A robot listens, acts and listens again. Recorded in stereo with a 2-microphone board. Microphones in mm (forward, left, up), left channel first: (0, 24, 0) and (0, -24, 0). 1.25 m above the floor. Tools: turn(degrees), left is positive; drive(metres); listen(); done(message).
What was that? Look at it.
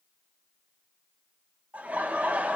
turn(degrees=-35)
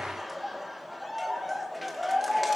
done("Found it: laughter, straight ahead, 2 to 4 m away.")